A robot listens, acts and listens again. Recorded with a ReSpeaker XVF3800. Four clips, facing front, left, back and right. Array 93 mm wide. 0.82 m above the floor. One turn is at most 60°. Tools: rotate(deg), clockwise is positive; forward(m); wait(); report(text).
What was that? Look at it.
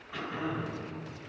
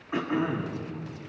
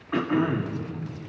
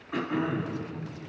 rotate(-60)
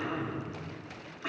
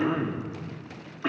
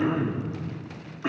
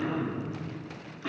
rotate(-60)
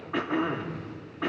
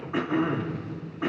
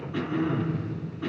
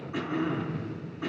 rotate(-30)
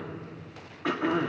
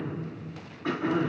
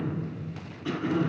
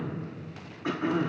report("Found it: throat clearing, straight ahead, 2 to 4 m away.")